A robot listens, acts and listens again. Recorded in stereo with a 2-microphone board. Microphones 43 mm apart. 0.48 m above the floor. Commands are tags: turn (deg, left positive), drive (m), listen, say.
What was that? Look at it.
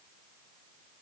<listen/>
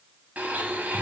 <turn deg="-40"/>
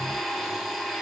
<say>Found it: a blender, straight ahead.</say>